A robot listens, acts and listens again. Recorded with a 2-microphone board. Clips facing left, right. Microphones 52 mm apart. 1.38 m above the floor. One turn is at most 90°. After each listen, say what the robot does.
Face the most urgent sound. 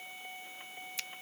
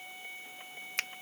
Keep listening.
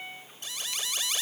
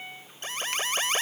Turn 45° right.
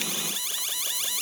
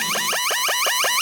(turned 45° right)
Turn 90° right.
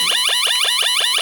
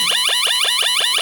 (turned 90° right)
Facing the alarm.